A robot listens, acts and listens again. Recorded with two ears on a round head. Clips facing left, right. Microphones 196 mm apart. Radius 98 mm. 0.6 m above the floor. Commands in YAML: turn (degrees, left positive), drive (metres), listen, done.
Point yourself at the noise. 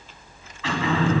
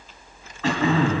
turn: -40
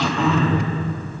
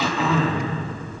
done: "Found it: throat clearing, straight ahead, 2 to 4 m away."